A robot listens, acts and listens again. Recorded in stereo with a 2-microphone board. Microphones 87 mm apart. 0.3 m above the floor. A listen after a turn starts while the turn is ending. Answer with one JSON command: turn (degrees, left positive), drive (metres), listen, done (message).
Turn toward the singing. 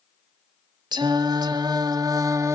{"turn": -35}
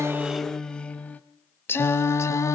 {"turn": 35}
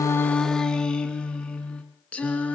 {"turn": 15}
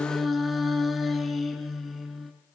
{"done": "Facing the singing, 2 to 4 m away."}